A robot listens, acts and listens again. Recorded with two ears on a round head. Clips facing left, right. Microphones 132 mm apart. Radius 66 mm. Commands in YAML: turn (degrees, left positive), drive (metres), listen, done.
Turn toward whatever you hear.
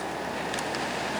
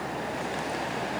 listen: true
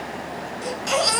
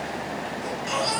turn: 70
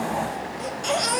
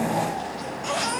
turn: 40
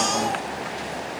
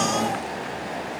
turn: 15
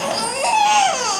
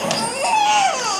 done: "Found it: a baby crying, straight ahead."